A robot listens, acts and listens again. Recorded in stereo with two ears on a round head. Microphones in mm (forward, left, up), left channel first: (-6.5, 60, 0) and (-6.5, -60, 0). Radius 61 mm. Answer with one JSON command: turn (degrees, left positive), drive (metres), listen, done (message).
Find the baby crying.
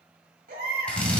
{"turn": -70}
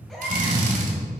{"done": "Facing the baby crying."}